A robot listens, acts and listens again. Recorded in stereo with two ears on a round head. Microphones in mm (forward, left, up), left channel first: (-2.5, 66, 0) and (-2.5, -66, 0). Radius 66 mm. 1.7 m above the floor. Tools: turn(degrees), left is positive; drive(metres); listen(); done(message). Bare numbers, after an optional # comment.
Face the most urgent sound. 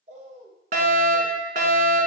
# The fire alarm: about 65° right or 115° right.
turn(-65)
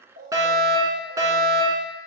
# So it is at 25° right.
turn(-25)
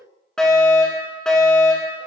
done("Facing the fire alarm.")